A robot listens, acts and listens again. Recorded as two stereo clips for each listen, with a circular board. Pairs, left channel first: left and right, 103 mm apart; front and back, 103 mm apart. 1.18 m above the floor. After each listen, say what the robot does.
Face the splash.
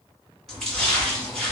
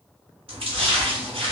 Turn 175° left.
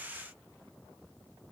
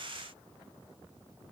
I heard a splash from this way, but can't make it out now.